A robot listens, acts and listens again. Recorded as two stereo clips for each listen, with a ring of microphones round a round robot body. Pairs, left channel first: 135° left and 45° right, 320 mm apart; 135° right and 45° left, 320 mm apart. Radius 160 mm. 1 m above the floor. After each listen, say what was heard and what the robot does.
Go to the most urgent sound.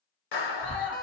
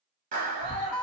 The scream: 155° left. Turn 155° left.
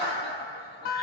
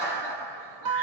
Keep listening.
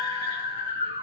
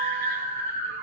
The scream is now 30° left. Turn 30° left.
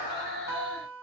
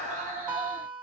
The scream is now 10° right. Turn 10° right.
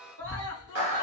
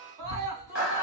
Drive 1.0 m forward.
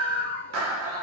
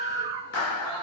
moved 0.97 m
Drive 1.0 m forward.
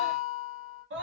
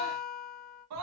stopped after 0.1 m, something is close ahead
The scream is now 10° left. Turn 10° left.
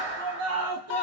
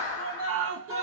I am next to the scream.